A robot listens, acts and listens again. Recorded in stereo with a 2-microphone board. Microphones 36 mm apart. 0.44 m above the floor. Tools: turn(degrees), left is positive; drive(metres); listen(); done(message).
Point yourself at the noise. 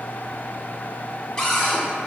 turn(degrees=15)
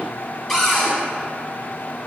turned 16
done("Facing the cupboard door, under 1 m away.")